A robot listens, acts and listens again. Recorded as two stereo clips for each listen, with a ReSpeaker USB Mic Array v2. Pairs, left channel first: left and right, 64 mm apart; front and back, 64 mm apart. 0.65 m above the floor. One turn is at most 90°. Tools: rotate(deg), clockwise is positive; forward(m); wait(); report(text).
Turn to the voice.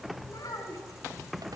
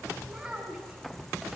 rotate(-90)
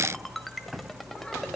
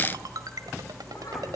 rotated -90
rotate(-15)
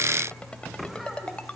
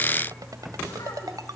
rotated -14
wait()
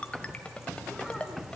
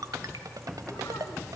report("Facing where the child speaking came from. I can't hear it now.")